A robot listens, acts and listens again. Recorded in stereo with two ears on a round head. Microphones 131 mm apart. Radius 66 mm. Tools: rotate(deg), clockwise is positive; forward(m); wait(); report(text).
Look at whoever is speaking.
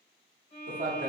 rotate(55)
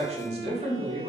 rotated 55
rotate(55)
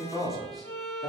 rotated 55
report("Found it: a man speaking, straight ahead, 1 to 2 m away.")